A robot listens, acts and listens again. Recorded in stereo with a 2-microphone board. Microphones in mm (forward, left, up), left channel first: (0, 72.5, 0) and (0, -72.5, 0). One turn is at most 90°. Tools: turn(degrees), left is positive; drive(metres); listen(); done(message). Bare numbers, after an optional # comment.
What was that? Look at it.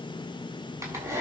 # The hair dryer: about 20° right or 160° right.
turn(-20)
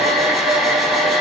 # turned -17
done("Found it: a hair dryer, straight ahead, over 4 m away.")